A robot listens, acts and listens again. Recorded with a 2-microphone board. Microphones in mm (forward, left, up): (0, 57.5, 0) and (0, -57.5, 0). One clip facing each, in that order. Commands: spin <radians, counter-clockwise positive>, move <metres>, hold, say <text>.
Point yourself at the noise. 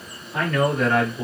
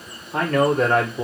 spin -0.70
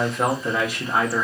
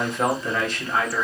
spin 0.35
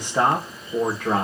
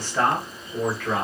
spin 0.70
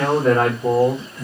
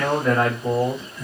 spin 0.70
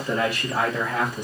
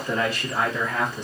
spin 0.17
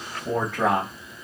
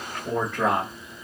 say Found it: a man speaking, straight ahead.